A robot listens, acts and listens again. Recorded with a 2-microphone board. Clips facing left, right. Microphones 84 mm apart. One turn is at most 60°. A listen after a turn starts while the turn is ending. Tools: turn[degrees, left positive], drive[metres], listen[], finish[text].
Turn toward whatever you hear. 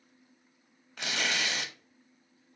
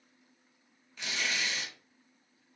Thought: The tearing paper: about 55° left or 125° left.
Action: turn[55]
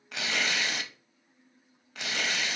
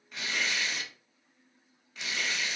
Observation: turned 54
Thought: So it is at 70° left.
Action: turn[60]
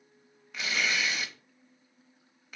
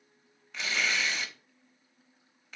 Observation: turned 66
Action: finish[Found it: tearing paper, straight ahead.]